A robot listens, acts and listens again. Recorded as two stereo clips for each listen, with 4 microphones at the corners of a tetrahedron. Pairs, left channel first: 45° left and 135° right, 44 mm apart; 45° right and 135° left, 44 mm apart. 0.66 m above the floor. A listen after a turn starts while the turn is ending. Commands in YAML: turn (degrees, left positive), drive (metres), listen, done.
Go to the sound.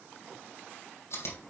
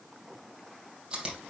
turn: 65
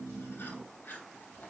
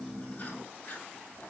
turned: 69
drive: 1.0
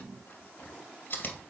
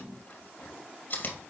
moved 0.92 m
drive: 1.0
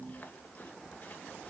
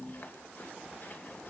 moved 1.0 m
turn: -10
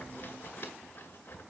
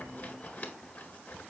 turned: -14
drive: 1.0
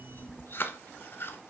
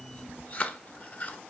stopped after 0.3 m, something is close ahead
done: "I am next to the chewing."